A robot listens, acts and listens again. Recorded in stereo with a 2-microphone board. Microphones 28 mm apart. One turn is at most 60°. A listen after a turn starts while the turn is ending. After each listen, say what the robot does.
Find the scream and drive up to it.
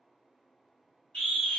Turn 40° left.
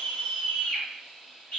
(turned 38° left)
Turn 60° left.
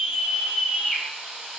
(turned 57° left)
Turn 35° left.
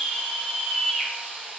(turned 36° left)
Drive 1.0 m forward.
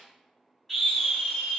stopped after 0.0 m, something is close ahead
Blocked. The scream is further on, straight ahead.